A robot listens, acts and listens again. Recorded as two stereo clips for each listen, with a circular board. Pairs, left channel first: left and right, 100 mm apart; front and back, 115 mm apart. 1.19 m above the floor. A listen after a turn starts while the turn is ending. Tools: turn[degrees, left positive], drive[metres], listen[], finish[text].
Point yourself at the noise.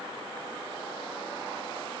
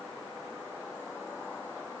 Action: listen[]
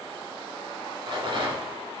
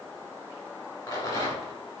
Thought: The rattle: 60° right.
Action: turn[-60]
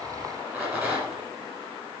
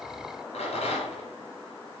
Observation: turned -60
Thought: The rattle is now 20° right.
Action: turn[-20]
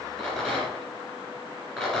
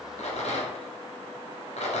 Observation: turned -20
Action: finish[Facing the rattle, 2 to 4 m away.]